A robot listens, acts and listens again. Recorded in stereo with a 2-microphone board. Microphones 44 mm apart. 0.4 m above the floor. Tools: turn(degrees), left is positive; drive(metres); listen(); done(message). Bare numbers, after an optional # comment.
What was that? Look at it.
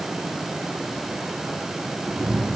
turn(-30)
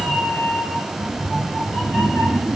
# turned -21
turn(30)
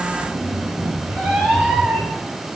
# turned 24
# So it is at 25° right.
turn(-25)
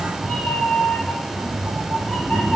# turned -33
# The cat meowing is now 10° left.
turn(10)
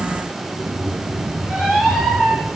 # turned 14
done("Facing the cat meowing.")